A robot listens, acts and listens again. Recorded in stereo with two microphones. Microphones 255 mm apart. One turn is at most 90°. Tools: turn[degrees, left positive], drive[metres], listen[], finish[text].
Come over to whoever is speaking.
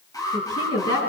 Thought: The woman speaking: about 70° left or 110° left.
Action: turn[70]
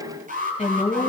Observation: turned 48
Thought: So it is at 30° left.
Action: turn[30]
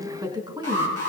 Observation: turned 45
Thought: The woman speaking is now 20° right.
Action: turn[-20]
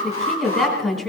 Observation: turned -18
Action: drive[1.0]
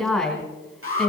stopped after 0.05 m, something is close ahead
Action: finish[Something is in my way. I am facing the woman speaking but have not reached it.]